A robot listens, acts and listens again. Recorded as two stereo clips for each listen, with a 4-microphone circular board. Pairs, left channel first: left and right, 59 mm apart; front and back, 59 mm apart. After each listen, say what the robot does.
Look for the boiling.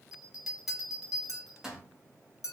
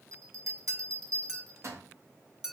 Keep listening.
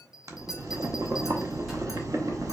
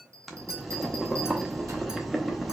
Turn 90° right.
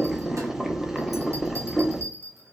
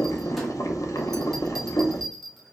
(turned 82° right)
Turn 10° right.
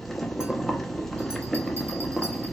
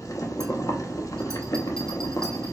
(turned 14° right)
Found it: boiling, straight ahead, under 1 m away.